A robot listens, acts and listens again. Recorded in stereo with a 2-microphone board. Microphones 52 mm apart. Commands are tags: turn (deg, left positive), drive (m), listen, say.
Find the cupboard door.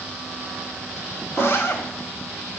<turn deg="30"/>
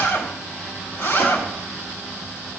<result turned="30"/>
<listen/>
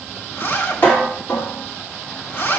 <turn deg="145"/>
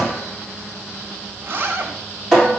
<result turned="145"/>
<turn deg="10"/>
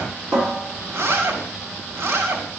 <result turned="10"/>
<say>Found it: a cupboard door, straight ahead.</say>